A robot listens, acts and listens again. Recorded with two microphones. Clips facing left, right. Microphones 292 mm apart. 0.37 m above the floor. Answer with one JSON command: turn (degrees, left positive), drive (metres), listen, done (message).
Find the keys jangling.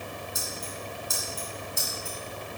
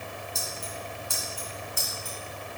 {"turn": 30}
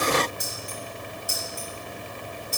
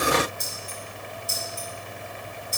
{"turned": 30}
{"turn": 25}
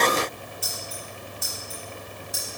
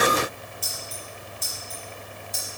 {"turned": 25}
{"turn": 10}
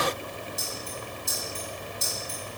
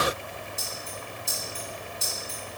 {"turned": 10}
{"done": "Facing the keys jangling."}